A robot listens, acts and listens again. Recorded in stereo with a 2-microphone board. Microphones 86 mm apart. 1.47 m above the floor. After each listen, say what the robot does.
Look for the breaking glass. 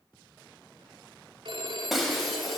Turn 30° left.
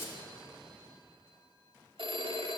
Turn 150° left.
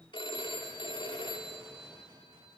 I heard breaking glass from this way, but can't make it out now.